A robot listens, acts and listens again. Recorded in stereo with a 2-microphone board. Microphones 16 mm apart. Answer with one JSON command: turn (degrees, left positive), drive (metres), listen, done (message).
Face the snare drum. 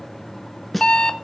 {"turn": 30}
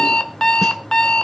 {"listen": true}
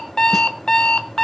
{"listen": true}
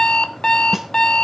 {"done": "I heard a snare drum, but can't make it out now. It was about 20° right or 140° left."}